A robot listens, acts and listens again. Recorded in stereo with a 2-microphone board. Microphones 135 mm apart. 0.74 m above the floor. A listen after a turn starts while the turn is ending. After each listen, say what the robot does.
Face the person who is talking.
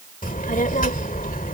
Turn 90° left.
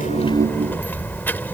Turn 15° left.
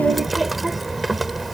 Found it: a child speaking, straight ahead.